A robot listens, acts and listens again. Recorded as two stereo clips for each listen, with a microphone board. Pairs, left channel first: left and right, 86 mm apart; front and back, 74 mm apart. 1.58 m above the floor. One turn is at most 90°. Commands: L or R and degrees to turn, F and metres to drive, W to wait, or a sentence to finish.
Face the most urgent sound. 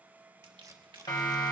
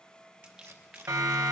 L90
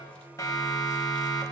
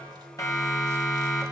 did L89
L40
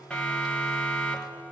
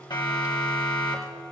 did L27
L10
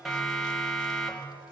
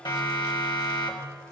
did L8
Facing the siren, 2 to 4 m away.